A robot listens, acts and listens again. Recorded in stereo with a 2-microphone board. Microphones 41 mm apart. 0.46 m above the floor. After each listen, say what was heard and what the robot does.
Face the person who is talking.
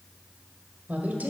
The woman speaking: about 45° right or 135° right. Turn 45° right.
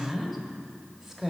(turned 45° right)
So it is at 15° right. Turn 15° right.
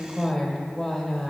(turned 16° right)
Found it: a woman speaking, straight ahead.